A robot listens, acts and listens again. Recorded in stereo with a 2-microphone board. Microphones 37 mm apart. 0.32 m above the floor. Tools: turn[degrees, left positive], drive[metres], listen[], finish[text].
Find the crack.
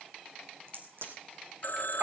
Thought: The crack: about 65° right or 115° right.
Action: turn[-65]
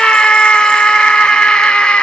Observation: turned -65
Action: listen[]
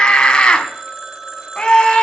Action: finish[I heard a crack, but can't make it out now. It was about straight ahead or 50° right.]